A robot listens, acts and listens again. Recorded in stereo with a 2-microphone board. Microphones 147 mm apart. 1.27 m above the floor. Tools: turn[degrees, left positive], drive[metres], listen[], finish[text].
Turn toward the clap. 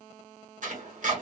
Action: listen[]
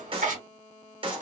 Thought: The clap: about 40° right or 140° right.
Action: turn[-40]
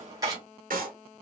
Thought: So it is at 100° right.
Action: turn[-100]
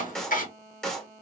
Action: finish[Facing the clap.]